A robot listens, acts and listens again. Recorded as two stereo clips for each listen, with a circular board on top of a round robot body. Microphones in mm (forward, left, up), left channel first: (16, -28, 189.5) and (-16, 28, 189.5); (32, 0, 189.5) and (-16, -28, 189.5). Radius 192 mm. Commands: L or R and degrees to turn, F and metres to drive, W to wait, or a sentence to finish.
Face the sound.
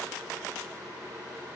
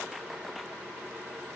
W
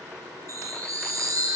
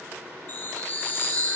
L85
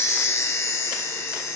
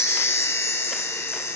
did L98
R10
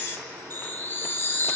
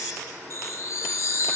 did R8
Found it: a chime, straight ahead, over 4 m away.